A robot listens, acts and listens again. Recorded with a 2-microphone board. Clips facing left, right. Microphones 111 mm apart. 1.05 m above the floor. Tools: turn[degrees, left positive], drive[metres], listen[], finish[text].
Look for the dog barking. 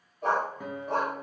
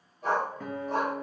Thought: The dog barking: about 55° left or 125° left.
Action: turn[55]
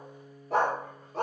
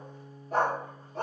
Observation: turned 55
Thought: So it is at 70° left.
Action: turn[70]
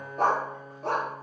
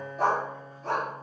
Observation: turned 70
Thought: The dog barking is now 65° left.
Action: turn[65]
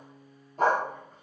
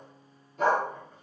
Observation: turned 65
Thought: The dog barking is now 40° left.
Action: turn[40]
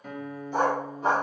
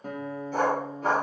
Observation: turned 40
Thought: The dog barking is now 15° left.
Action: turn[15]
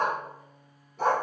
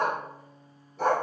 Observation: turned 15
Action: finish[Found it: a dog barking, straight ahead.]